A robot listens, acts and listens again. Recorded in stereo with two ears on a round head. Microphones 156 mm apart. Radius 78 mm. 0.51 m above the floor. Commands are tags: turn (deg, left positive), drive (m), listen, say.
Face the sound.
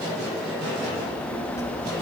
<turn deg="20"/>
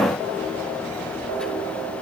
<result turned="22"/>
<turn deg="30"/>
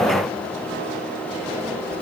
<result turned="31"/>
<turn deg="-15"/>
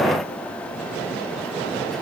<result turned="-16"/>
<listen/>
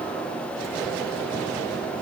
<listen/>
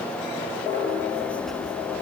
<say>Facing the child speaking.</say>